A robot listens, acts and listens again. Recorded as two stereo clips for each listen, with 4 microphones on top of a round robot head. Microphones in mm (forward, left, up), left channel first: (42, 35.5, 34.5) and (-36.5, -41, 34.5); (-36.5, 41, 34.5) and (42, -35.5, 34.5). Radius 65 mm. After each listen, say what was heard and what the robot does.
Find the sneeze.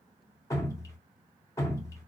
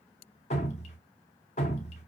Keep listening.
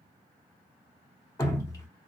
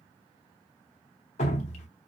Keep listening.
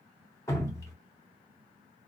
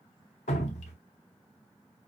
I can't make out a sneeze, only dripping.